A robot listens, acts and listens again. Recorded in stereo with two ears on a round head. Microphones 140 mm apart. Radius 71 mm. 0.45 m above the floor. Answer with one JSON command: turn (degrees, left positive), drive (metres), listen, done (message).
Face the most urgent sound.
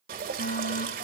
{"turn": 65}
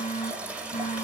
{"turn": 45}
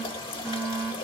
{"done": "Facing the fire alarm."}